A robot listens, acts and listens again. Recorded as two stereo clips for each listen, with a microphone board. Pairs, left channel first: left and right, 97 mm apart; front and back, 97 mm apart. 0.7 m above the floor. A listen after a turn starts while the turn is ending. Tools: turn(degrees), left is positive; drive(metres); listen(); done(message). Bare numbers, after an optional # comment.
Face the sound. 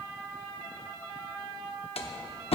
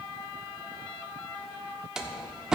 # The door slam: 95° left.
turn(95)
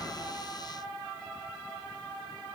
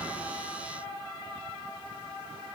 done("Facing where the door slam came from. I can't hear it now.")